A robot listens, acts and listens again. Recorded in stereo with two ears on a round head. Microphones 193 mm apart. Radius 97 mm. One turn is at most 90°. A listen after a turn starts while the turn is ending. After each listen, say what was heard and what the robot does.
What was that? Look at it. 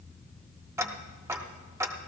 Turn 30° right.
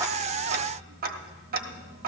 So it is at 135° right. Turn 90° right.
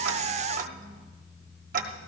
The ticking is now 35° right. Turn 35° right.
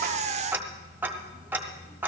The ticking is now 10° right. Turn 10° right.
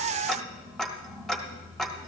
Found it: ticking, straight ahead.